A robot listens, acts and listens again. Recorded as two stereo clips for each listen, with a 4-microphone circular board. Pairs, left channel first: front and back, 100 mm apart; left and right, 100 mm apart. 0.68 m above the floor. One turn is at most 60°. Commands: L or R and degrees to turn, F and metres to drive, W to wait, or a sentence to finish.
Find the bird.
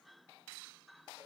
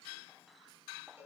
W
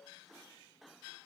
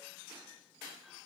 W
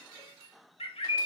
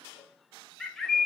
Found it: a bird, straight ahead, 1 to 2 m away.